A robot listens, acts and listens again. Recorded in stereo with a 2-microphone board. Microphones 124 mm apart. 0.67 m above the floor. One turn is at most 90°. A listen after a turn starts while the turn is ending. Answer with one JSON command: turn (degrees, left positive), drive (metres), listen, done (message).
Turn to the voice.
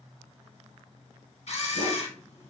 {"listen": true}
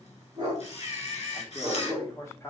{"turn": 25}
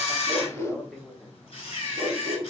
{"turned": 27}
{"done": "Found it: a man speaking, straight ahead."}